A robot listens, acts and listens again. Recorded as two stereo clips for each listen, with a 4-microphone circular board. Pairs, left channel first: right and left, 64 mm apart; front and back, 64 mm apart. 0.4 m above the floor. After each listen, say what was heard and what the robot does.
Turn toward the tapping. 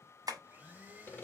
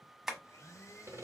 The tapping: 95° left. Turn 95° left.
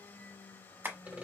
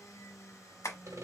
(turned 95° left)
The tapping is now 35° left. Turn 35° left.
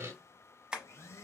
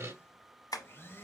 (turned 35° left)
The tapping is now 15° left. Turn 15° left.
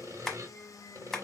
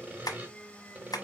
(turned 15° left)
Facing the tapping.